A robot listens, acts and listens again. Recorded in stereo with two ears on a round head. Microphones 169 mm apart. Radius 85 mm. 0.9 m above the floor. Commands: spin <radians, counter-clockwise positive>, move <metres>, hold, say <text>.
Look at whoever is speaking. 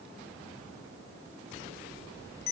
hold
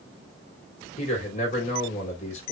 spin 0.70
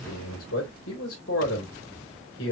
spin 1.75
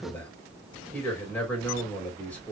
say Facing the man speaking.